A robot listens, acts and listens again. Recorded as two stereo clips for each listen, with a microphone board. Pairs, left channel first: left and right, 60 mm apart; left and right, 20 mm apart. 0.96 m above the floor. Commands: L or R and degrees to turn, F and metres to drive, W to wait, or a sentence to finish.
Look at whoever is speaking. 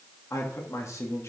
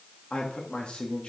L65
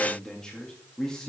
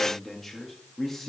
L15
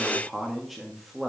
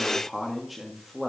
Found it: a man speaking, straight ahead.